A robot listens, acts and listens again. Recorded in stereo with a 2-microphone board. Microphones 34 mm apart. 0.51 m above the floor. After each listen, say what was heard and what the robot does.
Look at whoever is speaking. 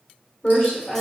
The woman speaking: about 55° left or 125° left. Turn 55° left.
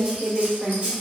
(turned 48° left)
So it is at 55° left. Turn 55° left.
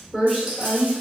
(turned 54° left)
Facing the woman speaking.